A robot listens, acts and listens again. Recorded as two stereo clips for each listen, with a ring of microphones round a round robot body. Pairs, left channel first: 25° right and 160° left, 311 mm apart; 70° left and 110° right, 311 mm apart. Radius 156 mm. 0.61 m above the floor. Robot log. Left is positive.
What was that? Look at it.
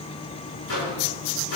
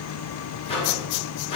end: Found it: a microwave, straight ahead.